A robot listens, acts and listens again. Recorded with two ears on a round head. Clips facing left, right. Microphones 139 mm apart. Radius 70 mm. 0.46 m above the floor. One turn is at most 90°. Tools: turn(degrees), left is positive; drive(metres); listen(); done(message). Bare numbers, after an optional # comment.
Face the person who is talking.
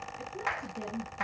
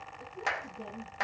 turn(90)
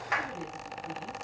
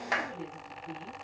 done("Facing the woman speaking, over 4 m away.")